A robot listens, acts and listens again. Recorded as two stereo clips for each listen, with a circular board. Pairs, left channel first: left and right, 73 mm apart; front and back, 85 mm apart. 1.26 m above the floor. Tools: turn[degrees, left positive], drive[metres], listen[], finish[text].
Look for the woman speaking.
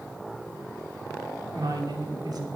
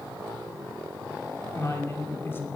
Thought: The woman speaking: 65° right.
Action: turn[-65]
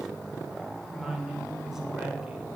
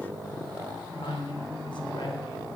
Thought: The woman speaking is now 10° right.
Action: turn[-10]
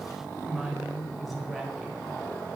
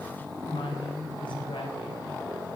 Action: finish[Found it: a woman speaking, straight ahead.]